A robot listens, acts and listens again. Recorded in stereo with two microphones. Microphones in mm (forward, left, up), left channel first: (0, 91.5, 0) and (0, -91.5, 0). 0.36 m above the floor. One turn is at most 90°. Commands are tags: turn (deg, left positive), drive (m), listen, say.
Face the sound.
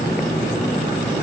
<listen/>
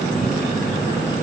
<listen/>
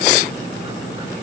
<say>I can't make out anything.</say>